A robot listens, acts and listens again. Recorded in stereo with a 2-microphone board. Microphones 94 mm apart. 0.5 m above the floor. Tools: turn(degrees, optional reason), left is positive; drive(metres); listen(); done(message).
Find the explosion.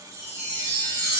listen()
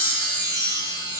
listen()
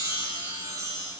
done("I can't make out an explosion, only a chime.")